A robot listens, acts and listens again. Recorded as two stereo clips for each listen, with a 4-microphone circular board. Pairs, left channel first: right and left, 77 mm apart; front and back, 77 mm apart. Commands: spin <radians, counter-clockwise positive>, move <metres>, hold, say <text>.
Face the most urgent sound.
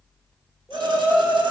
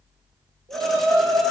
spin -3.05
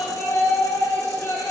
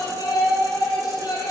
spin -0.61
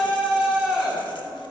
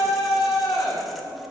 spin 0.17
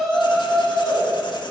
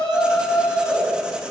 say Found it: a shout, straight ahead.